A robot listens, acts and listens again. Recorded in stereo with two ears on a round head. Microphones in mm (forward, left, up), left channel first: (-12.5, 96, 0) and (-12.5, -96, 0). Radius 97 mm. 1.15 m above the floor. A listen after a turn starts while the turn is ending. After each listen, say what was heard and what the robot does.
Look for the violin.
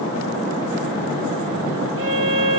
The violin: about 65° right or 115° right. Turn 65° right.
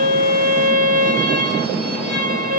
So it is at 50° right. Turn 50° right.
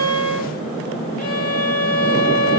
Found it: a violin, straight ahead.